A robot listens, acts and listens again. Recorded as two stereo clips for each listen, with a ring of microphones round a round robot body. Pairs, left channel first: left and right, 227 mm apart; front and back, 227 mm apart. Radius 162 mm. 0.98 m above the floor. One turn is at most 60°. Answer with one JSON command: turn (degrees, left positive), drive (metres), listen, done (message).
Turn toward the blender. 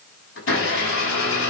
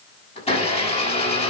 {"turn": 60}
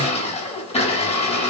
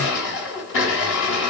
{"turn": 25}
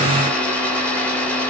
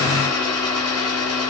{"done": "Facing the blender."}